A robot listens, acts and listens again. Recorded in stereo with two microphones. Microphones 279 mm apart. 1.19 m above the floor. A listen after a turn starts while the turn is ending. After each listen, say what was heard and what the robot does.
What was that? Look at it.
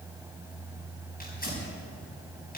The tearing paper: about 30° left or 150° left. Turn 30° left.
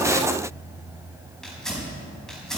Found it: tearing paper, straight ahead, over 4 m away.